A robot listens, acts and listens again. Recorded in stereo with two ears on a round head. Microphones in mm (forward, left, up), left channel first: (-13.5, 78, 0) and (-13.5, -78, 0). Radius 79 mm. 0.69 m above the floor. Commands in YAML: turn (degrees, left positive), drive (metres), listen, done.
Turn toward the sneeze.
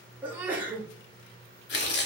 turn: -30
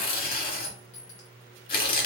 listen: true
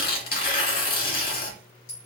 done: "I heard a sneeze, but can't make it out now. It was about 20° left or 140° right."